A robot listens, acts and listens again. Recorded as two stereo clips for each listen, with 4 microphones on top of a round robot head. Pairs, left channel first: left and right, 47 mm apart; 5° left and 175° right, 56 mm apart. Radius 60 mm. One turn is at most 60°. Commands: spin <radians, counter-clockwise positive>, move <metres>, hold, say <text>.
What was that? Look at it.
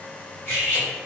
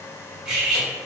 spin 1.05
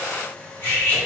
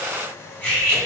spin 0.87
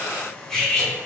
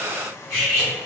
spin 0.17
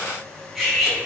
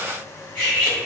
say Found it: cutlery clinking, straight ahead, 1 to 2 m away.